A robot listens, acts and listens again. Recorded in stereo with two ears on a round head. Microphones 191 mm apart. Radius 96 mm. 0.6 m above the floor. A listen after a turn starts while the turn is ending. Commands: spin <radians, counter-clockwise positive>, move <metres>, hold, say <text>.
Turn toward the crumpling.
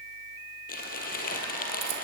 spin 0.79
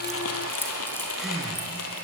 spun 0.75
spin 1.57
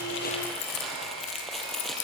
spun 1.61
say Facing the crumpling, 2 to 4 m away.